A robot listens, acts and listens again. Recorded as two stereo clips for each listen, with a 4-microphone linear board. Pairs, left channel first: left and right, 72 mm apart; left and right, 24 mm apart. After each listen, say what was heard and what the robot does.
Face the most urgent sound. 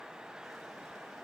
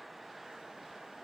Keep listening.
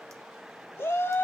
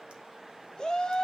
The shout: about 35° left or 145° left. Turn 35° left.
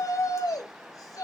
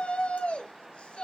So it is at 105° left. Turn 105° left.
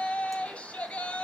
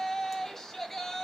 The shout is now 20° left. Turn 20° left.
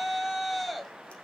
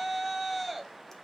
Found it: a shout, straight ahead.